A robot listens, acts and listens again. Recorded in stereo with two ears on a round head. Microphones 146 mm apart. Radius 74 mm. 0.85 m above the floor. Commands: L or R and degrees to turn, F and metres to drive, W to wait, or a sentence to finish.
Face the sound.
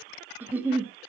R30
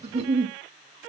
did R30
R140
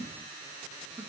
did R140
W
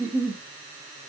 R10
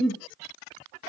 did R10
Facing the giggle, 1 to 2 m away.